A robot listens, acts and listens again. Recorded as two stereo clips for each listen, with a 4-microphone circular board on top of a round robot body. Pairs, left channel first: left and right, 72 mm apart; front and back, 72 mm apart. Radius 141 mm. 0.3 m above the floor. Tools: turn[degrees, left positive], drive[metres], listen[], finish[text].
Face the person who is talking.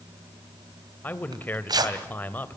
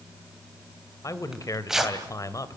Thought: The man speaking: 30° left.
Action: turn[30]
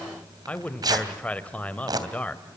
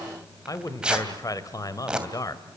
Thought: The man speaking is now 20° left.
Action: turn[20]
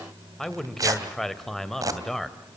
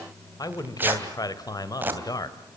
Action: finish[Facing the man speaking.]